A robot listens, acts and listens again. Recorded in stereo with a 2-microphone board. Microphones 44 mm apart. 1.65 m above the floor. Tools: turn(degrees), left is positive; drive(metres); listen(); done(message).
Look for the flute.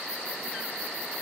listen()
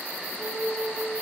turn(degrees=-60)
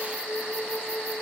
done("Facing the flute.")